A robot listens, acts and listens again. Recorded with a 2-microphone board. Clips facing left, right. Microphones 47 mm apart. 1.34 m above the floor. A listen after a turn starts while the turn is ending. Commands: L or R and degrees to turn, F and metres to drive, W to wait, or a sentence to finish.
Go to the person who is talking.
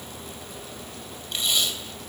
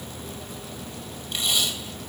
W
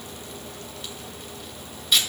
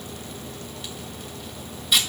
W
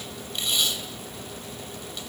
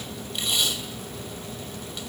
I can't make out anyone speaking, only tape being pulled.